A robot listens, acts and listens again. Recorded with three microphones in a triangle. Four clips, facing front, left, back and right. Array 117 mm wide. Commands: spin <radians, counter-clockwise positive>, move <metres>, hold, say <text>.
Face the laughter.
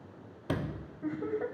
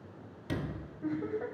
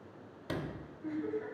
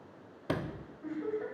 spin 0.35
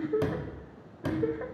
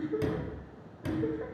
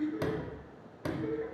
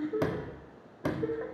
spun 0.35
spin -0.26
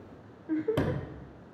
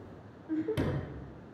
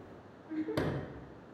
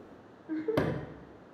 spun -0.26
spin -0.44
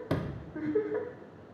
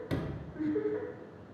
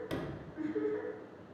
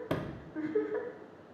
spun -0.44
spin -0.70
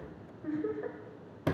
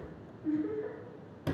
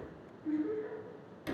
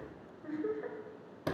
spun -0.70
spin -0.44
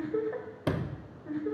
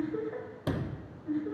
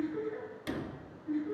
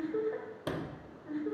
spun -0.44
say Facing the laughter, 1 to 2 m away.